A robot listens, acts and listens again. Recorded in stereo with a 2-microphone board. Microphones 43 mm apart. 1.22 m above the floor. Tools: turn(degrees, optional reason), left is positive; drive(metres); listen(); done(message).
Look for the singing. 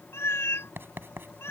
listen()
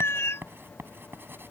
listen()
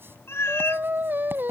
turn(degrees=-50, reason="The singing: about 50° right or 130° right.")
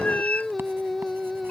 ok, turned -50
done("Found it: singing, straight ahead.")